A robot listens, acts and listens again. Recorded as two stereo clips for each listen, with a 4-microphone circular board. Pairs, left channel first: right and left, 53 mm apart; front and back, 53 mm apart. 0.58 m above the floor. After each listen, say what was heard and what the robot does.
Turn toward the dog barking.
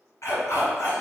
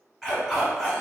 The dog barking: 80° right. Turn 80° right.
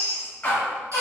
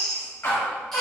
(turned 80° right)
The dog barking is now 35° right. Turn 35° right.
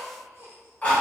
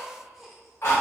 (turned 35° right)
The dog barking is now 25° right. Turn 25° right.
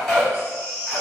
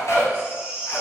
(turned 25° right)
Facing the dog barking.